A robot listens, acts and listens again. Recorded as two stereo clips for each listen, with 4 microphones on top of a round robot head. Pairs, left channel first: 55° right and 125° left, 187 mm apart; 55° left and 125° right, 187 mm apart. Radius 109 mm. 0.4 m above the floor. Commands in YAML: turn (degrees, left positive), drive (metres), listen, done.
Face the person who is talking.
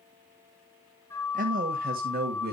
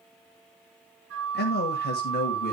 turn: 90
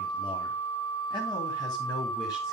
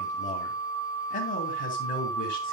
turn: 15
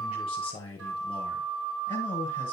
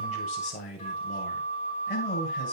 done: "Found it: a man speaking, straight ahead."